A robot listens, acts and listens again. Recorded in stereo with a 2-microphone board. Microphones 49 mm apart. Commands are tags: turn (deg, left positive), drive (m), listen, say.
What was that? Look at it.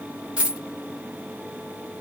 <turn deg="-25"/>
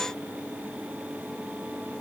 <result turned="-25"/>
<listen/>
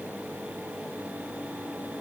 <say>I heard a dropped coin, but can't make it out now. It was about straight ahead or 130° right.</say>